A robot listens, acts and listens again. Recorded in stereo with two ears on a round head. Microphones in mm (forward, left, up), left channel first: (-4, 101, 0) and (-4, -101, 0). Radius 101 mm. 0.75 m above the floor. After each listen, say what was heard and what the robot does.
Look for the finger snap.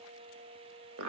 Keep listening.
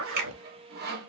The finger snap: about 45° right or 135° right. Turn 45° right.
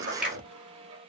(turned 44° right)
Found it: a finger snap, straight ahead.